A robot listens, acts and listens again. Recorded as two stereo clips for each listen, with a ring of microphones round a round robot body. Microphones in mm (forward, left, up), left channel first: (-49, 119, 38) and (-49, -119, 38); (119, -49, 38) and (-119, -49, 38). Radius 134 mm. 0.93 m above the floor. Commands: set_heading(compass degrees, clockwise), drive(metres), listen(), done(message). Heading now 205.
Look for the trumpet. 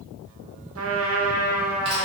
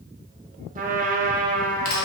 set_heading(330)
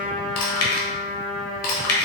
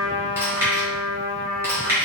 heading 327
done("Facing the trumpet.")